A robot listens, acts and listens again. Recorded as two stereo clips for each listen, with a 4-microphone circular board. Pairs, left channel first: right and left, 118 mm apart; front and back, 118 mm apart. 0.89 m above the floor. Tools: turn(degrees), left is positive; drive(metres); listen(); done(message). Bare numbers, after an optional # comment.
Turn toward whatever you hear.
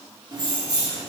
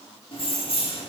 # The keys jangling: 40° left.
turn(40)
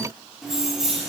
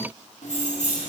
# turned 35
done("Facing the keys jangling, 1 to 2 m away.")